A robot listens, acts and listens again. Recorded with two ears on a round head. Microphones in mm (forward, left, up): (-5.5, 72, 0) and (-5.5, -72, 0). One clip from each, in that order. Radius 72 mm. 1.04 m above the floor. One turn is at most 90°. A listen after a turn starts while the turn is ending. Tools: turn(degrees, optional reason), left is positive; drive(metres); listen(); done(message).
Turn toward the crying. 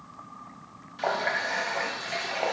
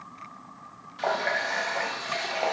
listen()
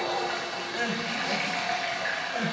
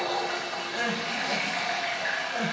turn(degrees=-30)
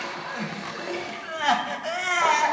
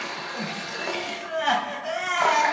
turn(degrees=25, reason="So it is at 25° left.")
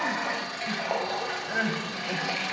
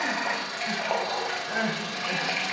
done("Facing the crying, 1 to 2 m away.")